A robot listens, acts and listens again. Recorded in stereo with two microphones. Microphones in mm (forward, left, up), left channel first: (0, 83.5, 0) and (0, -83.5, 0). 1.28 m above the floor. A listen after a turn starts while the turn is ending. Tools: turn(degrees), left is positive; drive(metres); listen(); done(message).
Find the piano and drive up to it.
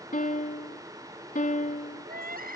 turn(degrees=55)
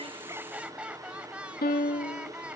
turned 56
turn(degrees=70)
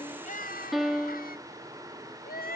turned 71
drive(metres=1.0)
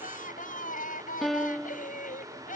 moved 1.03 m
drive(metres=1.0)
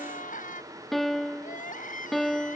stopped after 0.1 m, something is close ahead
done("Arrived at the piano, straight ahead.")